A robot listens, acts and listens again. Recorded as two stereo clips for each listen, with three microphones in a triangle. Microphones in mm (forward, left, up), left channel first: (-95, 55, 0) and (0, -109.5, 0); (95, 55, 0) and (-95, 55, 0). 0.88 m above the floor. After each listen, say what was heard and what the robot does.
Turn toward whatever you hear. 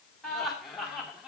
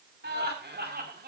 The laughter: 145° right. Turn 145° right.
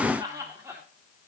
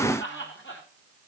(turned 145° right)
The laughter is now 15° left. Turn 15° left.
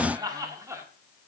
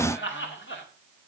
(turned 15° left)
The laughter is now 15° left. Turn 15° left.
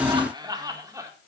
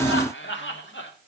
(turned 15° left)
The laughter is now 15° left. Turn 15° left.
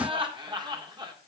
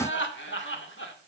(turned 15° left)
Facing the laughter, 2 to 4 m away.